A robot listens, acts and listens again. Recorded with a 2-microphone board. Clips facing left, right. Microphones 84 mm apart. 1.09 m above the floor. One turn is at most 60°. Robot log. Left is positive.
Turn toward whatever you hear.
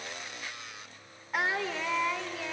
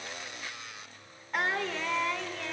cmd yaw +30
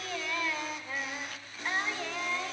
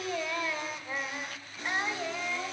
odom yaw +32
note: So it is at 15° right.
cmd yaw -15
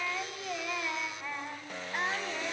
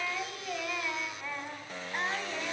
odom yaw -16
end: Found it: singing, straight ahead.